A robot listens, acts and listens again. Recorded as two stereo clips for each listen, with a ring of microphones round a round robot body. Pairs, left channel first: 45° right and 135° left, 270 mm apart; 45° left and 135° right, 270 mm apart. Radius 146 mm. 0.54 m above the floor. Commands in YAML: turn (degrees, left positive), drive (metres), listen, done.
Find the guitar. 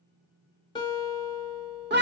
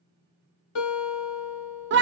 turn: 30
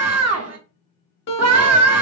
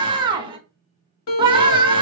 done: "Facing the guitar, 1 to 2 m away."